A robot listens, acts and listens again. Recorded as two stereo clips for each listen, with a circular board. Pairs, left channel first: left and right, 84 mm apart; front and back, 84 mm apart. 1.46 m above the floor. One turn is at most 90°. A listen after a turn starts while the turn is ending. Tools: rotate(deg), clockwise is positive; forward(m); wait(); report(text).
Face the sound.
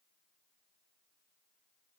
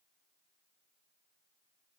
wait()
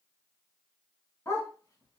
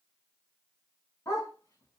rotate(-40)
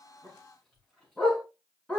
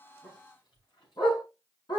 rotate(-10)
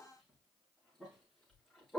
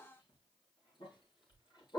rotate(-10)
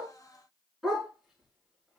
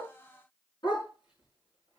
report("Found it: a dog barking, straight ahead, over 4 m away.")